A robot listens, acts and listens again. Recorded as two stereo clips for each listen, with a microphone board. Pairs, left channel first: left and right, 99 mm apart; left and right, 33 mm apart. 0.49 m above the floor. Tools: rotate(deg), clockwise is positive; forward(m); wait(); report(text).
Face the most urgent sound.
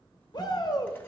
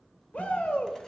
rotate(-50)
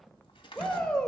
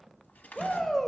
rotate(-10)
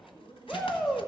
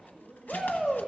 report("Facing the shout, 1 to 2 m away.")